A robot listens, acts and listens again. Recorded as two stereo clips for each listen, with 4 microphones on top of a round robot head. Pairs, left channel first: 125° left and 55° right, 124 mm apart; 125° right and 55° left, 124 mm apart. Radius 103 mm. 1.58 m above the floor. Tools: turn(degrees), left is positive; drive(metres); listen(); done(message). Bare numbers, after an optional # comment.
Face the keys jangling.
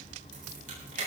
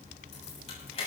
# The keys jangling: 80° right.
turn(-80)
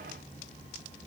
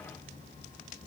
listen()
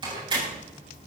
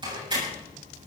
done("Found it: keys jangling, straight ahead, over 4 m away.")